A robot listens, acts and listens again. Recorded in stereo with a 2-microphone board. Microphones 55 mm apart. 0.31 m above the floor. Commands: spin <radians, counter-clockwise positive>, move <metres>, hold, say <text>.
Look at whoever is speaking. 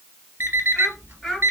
spin 0.52
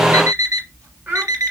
spin -0.52
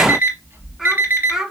spin -0.17
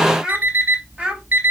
spin -0.26
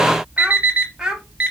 spin -0.17
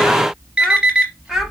say Facing the child speaking.